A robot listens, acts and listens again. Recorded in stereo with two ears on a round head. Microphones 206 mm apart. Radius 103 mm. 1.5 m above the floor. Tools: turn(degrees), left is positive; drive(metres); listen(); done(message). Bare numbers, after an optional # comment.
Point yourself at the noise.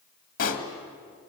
# The pop: about 40° left or 140° left.
turn(40)
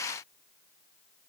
listen()
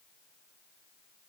done("I heard a pop, but can't make it out now. It was about straight ahead or 100° left.")